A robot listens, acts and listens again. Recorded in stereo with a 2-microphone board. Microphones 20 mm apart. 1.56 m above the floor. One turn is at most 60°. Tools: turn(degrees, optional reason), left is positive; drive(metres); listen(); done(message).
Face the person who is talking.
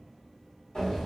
listen()
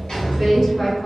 turn(degrees=20, reason="The woman speaking: about 20° left or 160° left.")
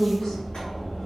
turn(degrees=60, reason="So it is at 140° left.")
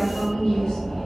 turn(degrees=60, reason="The woman speaking is now 100° left.")
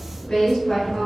turn(degrees=60, reason="The woman speaking is now 60° left.")
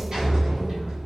listen()
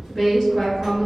done("Found it: a woman speaking, straight ahead, 1 to 2 m away.")